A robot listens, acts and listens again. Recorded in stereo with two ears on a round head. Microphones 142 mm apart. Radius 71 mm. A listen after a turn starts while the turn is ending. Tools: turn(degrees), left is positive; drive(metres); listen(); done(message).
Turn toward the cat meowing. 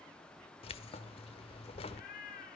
turn(degrees=60)
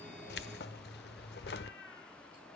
turn(degrees=80)
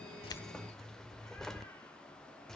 listen()
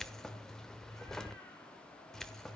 listen()
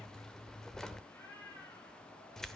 turn(degrees=15)
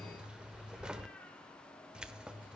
listen()
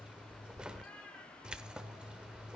turn(degrees=10)
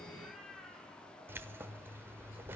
done("Found it: a cat meowing, straight ahead.")